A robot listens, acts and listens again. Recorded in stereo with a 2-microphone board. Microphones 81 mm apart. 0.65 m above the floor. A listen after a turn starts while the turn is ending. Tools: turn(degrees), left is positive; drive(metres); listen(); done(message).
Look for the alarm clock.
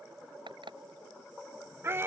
turn(degrees=-90)
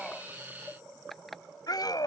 done("Found it: an alarm clock, straight ahead.")